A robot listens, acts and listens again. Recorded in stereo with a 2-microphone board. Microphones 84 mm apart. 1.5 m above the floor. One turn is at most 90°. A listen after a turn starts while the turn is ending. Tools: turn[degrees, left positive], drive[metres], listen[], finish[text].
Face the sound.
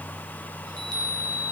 Thought: The chime: about 60° right or 120° right.
Action: turn[-60]
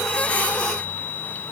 Thought: So it is at 65° right.
Action: turn[-65]
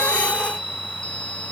Thought: The chime is now 10° left.
Action: turn[10]
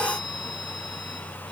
Action: listen[]
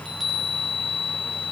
Action: finish[Found it: a chime, straight ahead, over 4 m away.]